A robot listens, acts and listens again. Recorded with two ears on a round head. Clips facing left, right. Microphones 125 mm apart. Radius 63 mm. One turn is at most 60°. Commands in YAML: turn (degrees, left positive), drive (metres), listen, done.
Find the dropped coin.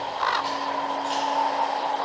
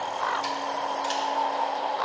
listen: true
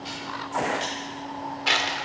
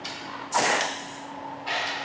turn: 60
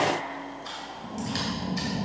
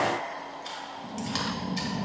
turn: 30
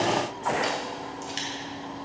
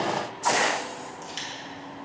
done: "I heard a dropped coin from this way, but can't make it out now."